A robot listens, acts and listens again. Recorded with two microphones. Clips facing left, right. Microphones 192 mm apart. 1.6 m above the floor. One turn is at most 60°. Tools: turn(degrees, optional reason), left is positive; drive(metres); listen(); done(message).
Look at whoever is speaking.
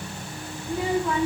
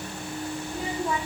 turn(degrees=60)
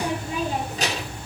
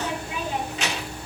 turn(degrees=40, reason="So it is at 40° left.")
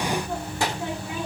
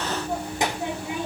turn(degrees=-20, reason="The child speaking is now 20° right.")
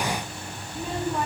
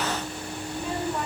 done("Facing the child speaking, 2 to 4 m away.")